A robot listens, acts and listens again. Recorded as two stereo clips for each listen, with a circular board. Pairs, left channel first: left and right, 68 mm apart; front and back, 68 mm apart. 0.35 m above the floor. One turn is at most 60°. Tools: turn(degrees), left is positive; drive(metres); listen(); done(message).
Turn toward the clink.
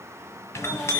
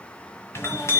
turn(degrees=45)
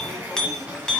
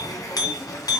turn(degrees=15)
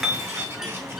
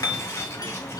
done("Found it: a clink, straight ahead.")